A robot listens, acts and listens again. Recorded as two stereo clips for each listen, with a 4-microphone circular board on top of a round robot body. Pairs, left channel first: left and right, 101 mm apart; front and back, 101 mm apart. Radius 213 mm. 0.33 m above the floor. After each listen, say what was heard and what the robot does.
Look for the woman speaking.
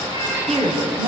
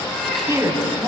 The woman speaking: 120° right. Turn 120° right.
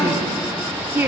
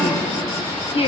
The woman speaking is now 20° right. Turn 20° right.
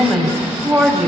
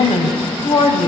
Found it: a woman speaking, straight ahead, 2 to 4 m away.